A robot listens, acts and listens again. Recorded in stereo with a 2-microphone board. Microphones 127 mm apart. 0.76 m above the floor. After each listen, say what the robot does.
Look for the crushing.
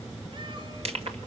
Turn 55° right.
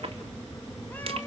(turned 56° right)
Turn 60° right.
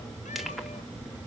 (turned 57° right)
Keep listening.
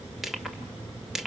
Facing the crushing.